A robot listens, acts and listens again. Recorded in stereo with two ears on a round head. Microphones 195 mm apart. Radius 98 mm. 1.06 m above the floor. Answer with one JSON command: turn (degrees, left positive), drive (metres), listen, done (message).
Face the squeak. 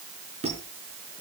{"turn": -30}
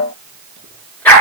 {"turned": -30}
{"listen": true}
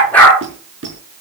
{"turn": -120}
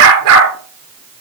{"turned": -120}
{"listen": true}
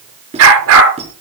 {"turn": -30}
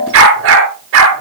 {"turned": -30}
{"listen": true}
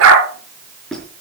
{"done": "Found it: a squeak, straight ahead, over 4 m away."}